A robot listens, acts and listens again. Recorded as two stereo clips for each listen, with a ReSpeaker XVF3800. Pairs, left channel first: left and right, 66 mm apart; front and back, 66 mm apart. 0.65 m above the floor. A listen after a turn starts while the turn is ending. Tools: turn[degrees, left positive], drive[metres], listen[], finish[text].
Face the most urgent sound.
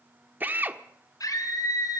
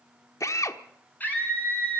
Thought: The scream: 65° left.
Action: turn[65]
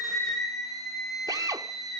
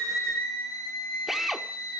Action: finish[Found it: a scream, straight ahead.]